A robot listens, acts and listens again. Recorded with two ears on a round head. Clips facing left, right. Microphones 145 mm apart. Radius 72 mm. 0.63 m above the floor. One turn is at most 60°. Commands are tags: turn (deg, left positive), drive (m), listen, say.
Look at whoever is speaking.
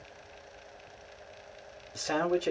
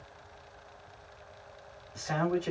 <turn deg="45"/>
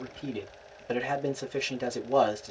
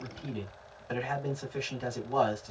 <turn deg="60"/>
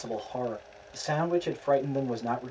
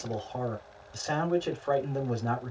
<turn deg="20"/>
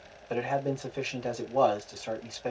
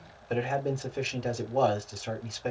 <say>Facing the man speaking.</say>